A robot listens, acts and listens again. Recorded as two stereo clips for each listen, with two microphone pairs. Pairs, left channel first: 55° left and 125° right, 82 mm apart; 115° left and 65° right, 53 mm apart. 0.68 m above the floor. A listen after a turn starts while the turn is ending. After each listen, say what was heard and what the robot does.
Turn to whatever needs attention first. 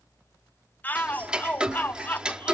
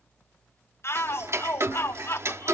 The shout: 120° left. Turn 120° left.
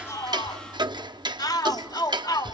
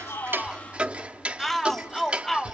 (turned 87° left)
The shout is now 30° left. Turn 30° left.
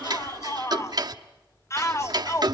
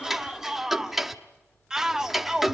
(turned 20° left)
The shout is now 10° left. Turn 10° left.
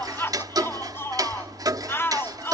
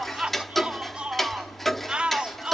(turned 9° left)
Found it: a shout, straight ahead, 1 to 2 m away.